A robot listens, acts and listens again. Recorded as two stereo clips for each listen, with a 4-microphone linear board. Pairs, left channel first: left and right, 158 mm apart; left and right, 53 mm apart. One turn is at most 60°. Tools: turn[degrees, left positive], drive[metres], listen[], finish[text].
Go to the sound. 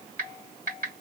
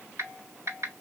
Thought: The typing on a keyboard: about 65° right or 115° right.
Action: turn[-60]
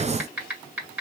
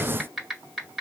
Thought: So it is at 10° right.
Action: turn[-10]
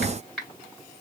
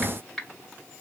Action: drive[1.0]
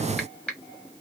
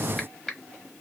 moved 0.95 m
Action: drive[1.0]
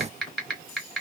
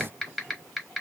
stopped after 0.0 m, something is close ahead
Action: finish[I am next to the typing on a keyboard.]